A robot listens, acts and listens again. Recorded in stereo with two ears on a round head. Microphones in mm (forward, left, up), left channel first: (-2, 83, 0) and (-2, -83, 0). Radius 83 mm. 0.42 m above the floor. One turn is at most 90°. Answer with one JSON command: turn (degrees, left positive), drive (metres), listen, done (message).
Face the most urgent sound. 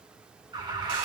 {"turn": -25}
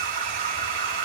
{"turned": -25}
{"turn": -90}
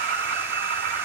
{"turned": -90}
{"turn": -65}
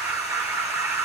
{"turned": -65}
{"turn": -15}
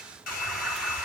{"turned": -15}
{"done": "Facing the alarm."}